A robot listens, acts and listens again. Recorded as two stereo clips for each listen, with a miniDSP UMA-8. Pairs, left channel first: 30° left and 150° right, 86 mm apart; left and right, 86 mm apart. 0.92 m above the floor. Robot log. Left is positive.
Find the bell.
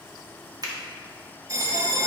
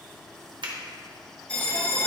note: The bell: 160° left.
cmd yaw +160
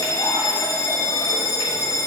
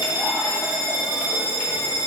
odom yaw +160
note: The bell is now 10° right.
cmd yaw -10
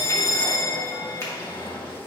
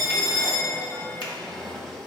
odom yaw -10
end: Found it: a bell, straight ahead, 1 to 2 m away.